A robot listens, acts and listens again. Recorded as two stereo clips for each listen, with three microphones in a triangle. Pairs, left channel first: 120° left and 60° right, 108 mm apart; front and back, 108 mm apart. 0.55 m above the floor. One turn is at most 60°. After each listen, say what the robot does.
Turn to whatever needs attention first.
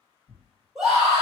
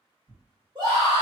Turn 60° right.
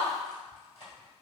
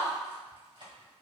Turn 60° right.
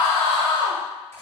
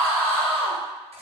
Turn 60° right.
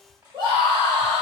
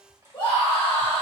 Turn 25° right.
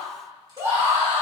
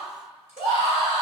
Facing the scream, 1 to 2 m away.